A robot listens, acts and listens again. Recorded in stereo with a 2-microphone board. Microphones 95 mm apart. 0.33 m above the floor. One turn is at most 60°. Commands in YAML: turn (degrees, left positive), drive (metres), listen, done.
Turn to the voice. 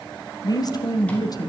turn: 45
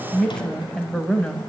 turn: 10
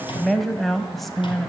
done: "Facing the woman speaking, 1 to 2 m away."